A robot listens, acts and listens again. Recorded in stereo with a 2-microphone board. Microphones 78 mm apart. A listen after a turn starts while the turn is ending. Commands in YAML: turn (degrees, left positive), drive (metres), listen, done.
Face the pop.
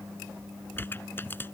turn: 30
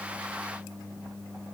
listen: true
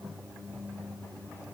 done: "I heard a pop, but can't make it out now. It was about straight ahead or 120° left."